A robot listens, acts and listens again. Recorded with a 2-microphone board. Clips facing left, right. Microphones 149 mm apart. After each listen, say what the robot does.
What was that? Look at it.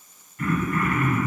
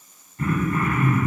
Turn 30° right.
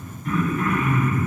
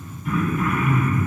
Facing the throat clearing.